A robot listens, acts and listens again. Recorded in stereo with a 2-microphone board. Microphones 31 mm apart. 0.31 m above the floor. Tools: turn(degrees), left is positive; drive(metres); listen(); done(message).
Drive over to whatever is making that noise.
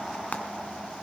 turn(degrees=45)
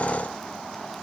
listen()
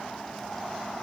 listen()
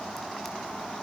done("I heard frying, but can't make it out now. It was about straight ahead or 90° left. I did not reach it.")